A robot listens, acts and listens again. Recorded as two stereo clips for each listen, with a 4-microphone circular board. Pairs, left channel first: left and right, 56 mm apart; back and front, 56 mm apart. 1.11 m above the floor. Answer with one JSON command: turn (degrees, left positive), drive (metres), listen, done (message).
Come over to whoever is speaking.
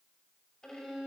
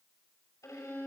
{"listen": true}
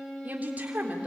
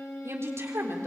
{"turn": -30}
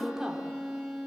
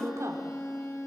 {"turn": -10}
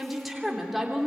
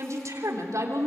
{"drive": 1.0}
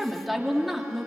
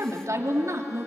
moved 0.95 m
{"drive": 1.0}
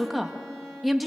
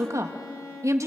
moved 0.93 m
{"drive": 1.0}
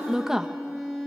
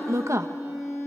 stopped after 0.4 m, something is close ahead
{"turn": -10}
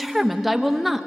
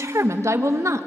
{"done": "Arrived at the woman speaking, straight ahead."}